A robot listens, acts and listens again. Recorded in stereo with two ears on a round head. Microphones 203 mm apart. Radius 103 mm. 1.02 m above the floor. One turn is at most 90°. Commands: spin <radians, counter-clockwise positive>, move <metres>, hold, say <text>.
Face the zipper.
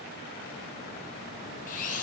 hold
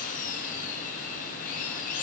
hold
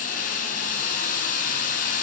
say I can't make out a zipper, only a drill.